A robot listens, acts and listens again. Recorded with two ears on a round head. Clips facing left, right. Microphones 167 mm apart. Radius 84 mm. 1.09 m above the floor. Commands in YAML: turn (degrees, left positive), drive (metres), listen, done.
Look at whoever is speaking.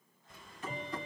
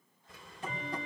listen: true
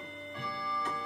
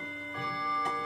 listen: true
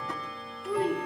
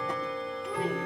turn: 30
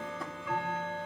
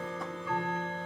listen: true
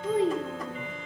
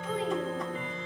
turn: 145
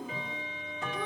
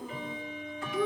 done: "Found it: a child speaking, straight ahead."